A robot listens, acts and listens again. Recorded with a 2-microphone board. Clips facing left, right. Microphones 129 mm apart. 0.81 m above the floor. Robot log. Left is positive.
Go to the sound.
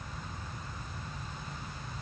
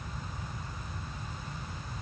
cmd idle
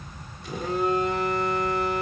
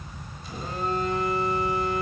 note: The phone buzzing: about 70° left or 110° left.
cmd yaw +70
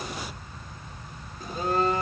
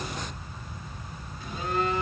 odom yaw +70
note: So it is at 40° left.
cmd yaw +40
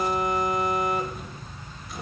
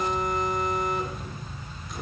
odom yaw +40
cmd fwd 1.0
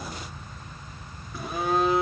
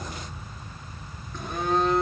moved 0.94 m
cmd fwd 1.0
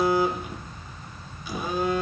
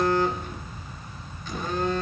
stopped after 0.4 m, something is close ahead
note: The phone buzzing is now 10° left.
cmd yaw +10
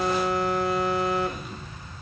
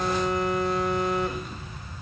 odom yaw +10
end: Arrived at the phone buzzing, straight ahead.